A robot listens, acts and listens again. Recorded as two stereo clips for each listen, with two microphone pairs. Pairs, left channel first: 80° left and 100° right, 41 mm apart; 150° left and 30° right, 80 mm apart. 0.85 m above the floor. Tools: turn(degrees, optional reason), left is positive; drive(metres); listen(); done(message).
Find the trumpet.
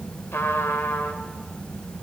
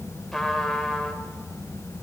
turn(degrees=65, reason="The trumpet: 65° left.")
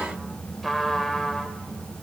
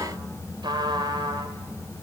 turn(degrees=-10, reason="The trumpet is now 10° right.")
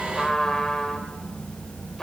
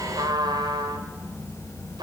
done("Found it: a trumpet, straight ahead.")